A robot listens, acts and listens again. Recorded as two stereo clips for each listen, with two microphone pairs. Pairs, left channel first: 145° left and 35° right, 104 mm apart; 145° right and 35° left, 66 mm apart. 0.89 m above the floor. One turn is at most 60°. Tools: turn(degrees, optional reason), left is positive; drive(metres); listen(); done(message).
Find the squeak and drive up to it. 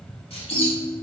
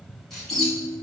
turn(degrees=60, reason="The squeak: 130° left.")
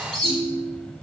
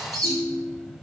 turn(degrees=60, reason="The squeak is now 65° left.")
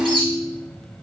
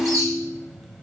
drive(metres=1.0)
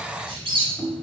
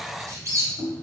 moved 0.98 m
drive(metres=1.0)
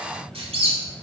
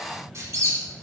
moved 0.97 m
turn(degrees=-10, reason="The squeak is now 10° right.")
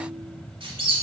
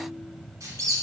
drive(metres=1.0)
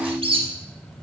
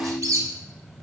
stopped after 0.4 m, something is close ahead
done("Arrived at the squeak, straight ahead.")